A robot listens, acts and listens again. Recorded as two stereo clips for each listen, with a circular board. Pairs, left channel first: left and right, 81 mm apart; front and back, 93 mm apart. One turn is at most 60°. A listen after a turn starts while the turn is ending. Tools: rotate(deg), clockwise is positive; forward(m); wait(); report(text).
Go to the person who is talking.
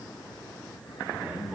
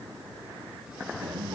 rotate(60)
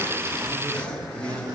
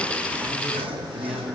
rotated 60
rotate(60)
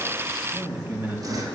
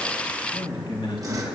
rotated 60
rotate(30)
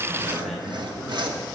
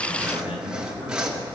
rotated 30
forward(1.0)
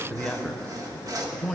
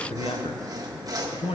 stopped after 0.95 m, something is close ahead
rotate(-10)
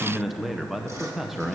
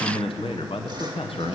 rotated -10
report("I am next to the man speaking.")